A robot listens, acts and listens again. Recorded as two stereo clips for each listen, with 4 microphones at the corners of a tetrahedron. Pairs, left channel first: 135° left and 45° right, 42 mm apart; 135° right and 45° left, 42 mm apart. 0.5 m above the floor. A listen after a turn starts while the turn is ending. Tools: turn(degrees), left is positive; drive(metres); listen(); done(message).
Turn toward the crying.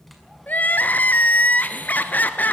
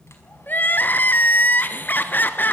turn(degrees=180)
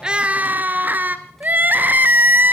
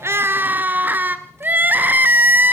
done("Found it: crying, straight ahead.")